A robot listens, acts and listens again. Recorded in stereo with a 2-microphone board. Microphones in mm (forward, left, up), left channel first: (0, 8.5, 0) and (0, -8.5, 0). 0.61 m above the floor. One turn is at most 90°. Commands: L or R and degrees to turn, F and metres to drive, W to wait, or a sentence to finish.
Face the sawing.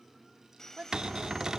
L20
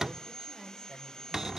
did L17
L90
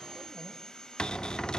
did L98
L45
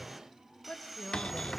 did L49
Found it: sawing, straight ahead, 1 to 2 m away.